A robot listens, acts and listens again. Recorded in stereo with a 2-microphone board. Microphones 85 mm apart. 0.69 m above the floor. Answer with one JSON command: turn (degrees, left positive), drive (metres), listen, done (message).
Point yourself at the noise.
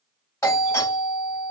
{"turn": 35}
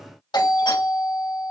{"turn": 105}
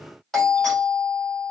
{"done": "Found it: a doorbell, straight ahead."}